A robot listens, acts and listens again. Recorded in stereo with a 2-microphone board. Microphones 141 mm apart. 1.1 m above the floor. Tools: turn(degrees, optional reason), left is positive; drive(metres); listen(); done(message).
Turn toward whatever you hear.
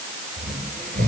turn(degrees=-90)
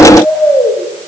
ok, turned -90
done("Found it: snoring, straight ahead, over 4 m away.")